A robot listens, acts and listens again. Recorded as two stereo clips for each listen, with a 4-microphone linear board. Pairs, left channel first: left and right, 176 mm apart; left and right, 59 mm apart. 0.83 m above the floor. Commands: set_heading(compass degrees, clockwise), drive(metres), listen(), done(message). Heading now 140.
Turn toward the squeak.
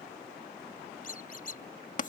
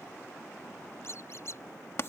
set_heading(85)
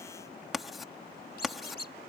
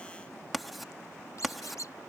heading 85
set_heading(15)
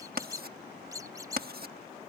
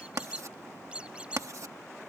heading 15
set_heading(35)
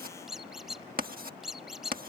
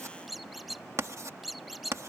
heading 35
done("Found it: a squeak, straight ahead.")